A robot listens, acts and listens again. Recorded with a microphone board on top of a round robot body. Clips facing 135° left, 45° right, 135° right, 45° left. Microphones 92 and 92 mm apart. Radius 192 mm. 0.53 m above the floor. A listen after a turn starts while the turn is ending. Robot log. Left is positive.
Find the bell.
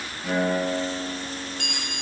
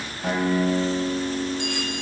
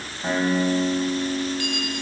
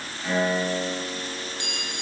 note: The bell: 110° left.
cmd yaw +110
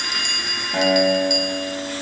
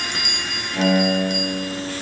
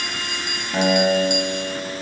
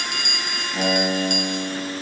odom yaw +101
note: The bell is now 10° left.
cmd yaw +10
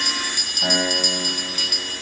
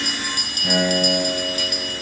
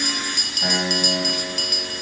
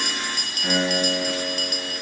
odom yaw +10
end: Facing the bell, 1 to 2 m away.